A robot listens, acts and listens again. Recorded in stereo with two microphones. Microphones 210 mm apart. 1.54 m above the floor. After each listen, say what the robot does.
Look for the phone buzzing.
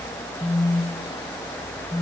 Turn 30° left.
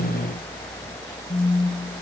Turn 145° left.
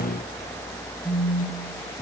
Found it: a phone buzzing, straight ahead, under 1 m away.